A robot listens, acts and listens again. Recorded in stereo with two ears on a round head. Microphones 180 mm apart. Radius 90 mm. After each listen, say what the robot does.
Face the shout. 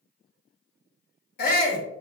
Turn 45° left.
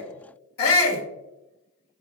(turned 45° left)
Turn 85° left.
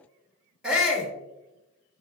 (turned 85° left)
Found it: a shout, straight ahead.